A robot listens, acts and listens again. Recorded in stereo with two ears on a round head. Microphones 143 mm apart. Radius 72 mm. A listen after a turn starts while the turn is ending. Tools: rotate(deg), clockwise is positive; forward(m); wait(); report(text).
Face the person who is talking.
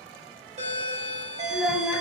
rotate(-30)
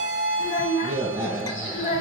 rotate(-140)
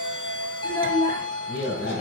rotate(-20)
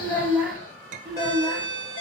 report("Found it: a child speaking, straight ahead, 1 to 2 m away.")